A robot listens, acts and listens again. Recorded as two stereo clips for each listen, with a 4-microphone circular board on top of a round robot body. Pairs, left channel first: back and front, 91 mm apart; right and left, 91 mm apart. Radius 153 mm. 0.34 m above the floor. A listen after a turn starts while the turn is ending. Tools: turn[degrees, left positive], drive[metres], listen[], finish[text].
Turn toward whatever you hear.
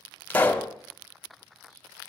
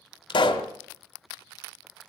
Thought: The pop: 110° right.
Action: turn[-110]
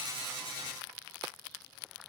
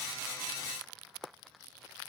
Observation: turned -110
Action: finish[Facing where the pop came from. I can't hear it now.]